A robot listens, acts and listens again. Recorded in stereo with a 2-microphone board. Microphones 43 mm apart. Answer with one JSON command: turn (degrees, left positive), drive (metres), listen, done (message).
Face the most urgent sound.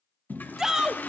{"turn": -30}
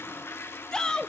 {"turn": 20}
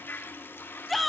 {"done": "Found it: a shout, straight ahead."}